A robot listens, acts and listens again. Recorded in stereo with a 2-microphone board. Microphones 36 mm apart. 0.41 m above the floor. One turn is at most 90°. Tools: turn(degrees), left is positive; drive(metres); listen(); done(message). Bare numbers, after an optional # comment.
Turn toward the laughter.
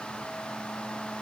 listen()
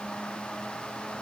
listen()
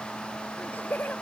# The laughter: about 60° left or 120° left.
turn(60)
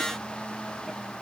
listen()
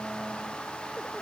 listen()
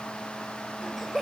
done("Found it: laughter, straight ahead.")